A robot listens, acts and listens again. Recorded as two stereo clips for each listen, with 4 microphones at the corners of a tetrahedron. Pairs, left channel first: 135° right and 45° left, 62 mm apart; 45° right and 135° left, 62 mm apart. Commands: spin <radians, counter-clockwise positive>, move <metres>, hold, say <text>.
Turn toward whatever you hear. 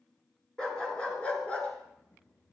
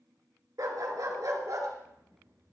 spin 2.71
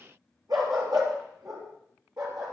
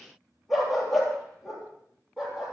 spin 0.87
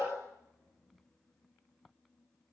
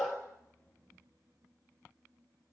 spin 0.17
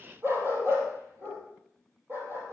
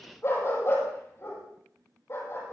say Found it: a dog barking, straight ahead.